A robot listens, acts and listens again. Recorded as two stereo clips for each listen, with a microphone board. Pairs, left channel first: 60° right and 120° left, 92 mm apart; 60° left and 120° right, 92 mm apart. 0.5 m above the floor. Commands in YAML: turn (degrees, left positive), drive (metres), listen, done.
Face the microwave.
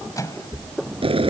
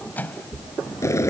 turn: -10
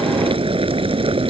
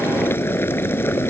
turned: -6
listen: true
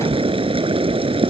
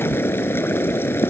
listen: true
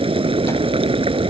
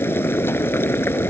done: "I heard a microwave from this way, but can't make it out now."